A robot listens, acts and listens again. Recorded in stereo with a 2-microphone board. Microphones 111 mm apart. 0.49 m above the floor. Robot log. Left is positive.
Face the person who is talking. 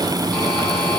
cmd idle
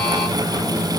cmd idle
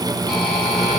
end: I can't make out anyone speaking.